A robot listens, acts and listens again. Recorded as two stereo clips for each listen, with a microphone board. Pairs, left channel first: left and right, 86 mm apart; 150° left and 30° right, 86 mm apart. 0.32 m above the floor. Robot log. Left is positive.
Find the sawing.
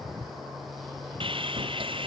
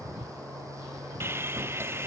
note: The sawing: 95° right.
cmd yaw -95
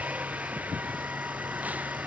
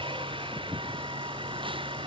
note: The sawing is now 15° right.
cmd yaw -15
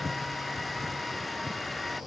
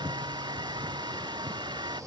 end: Facing the sawing.